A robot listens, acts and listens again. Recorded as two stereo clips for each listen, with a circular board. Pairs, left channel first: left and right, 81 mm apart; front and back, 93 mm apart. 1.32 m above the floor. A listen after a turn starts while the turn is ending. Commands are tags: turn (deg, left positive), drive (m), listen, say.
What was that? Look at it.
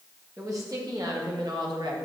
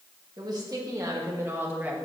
<turn deg="-110"/>
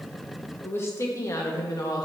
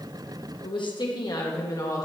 <turn deg="50"/>
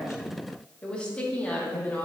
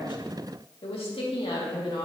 <turn deg="20"/>
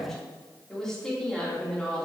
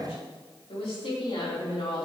<say>Found it: a woman speaking, straight ahead, 2 to 4 m away.</say>